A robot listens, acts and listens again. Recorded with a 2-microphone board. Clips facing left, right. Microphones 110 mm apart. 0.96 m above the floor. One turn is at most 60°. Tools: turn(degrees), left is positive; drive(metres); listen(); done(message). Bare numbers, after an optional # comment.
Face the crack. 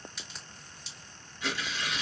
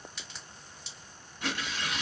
turn(30)
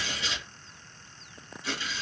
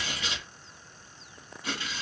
listen()
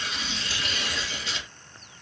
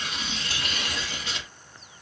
done("I heard a crack, but can't make it out now. It was about 30° right or 150° left.")